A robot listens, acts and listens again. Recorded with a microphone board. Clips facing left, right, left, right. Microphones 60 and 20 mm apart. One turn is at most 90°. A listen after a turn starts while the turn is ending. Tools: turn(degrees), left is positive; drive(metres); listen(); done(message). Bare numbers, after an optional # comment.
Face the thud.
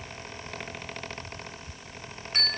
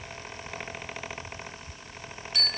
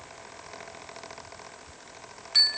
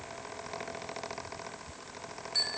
listen()
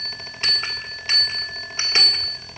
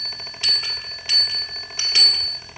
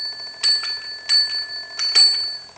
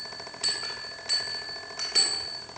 listen()
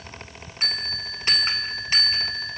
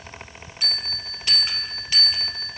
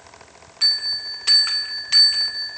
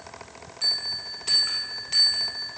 done("I can't make out a thud, only a bell.")